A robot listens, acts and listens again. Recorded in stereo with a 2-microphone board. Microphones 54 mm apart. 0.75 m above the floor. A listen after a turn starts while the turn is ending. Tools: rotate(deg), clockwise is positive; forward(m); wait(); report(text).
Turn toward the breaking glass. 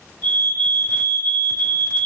wait()
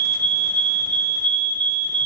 wait()
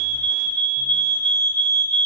report("I can't make out breaking glass, only a fire alarm.")